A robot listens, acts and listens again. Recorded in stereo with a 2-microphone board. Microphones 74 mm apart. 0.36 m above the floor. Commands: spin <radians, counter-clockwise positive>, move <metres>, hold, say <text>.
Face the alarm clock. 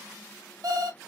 spin -1.05
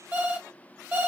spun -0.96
spin -0.52
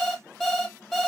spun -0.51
say Found it: an alarm clock, straight ahead, 1 to 2 m away.